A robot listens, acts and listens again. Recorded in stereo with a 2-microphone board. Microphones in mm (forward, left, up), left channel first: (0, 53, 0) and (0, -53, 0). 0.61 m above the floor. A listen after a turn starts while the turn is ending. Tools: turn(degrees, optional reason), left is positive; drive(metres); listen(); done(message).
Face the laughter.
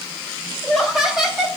turn(degrees=-30)
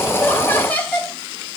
turn(degrees=15, reason="So it is at 15° left.")
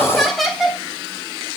done("Found it: laughter, straight ahead.")